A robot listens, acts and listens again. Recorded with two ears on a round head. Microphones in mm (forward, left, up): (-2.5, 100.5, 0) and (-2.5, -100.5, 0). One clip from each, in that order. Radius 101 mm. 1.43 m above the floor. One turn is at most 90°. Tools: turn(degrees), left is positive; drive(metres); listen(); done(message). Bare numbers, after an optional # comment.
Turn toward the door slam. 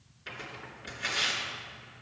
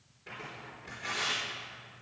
listen()
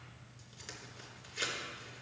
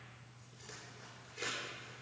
listen()
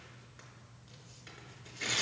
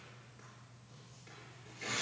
done("I can't make out a door slam, only tearing paper.")